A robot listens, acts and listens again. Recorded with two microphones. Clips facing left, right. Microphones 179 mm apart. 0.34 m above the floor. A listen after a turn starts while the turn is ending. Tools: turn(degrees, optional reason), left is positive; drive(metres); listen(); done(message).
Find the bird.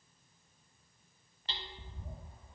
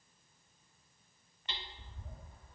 turn(degrees=25, reason="The bird: about 25° left or 155° left.")
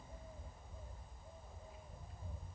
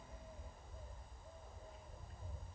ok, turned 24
done("Found it: a bird, straight ahead.")